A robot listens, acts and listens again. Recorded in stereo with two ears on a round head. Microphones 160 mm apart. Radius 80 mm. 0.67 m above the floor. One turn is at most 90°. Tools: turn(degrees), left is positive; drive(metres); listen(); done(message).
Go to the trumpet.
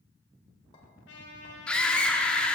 turn(degrees=70)
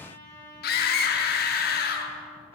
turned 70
turn(degrees=15)
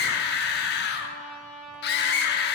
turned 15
drive(metres=1.0)
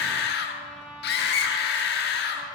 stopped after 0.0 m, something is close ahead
done("Something is in my way. I am facing the trumpet but have not reached it.")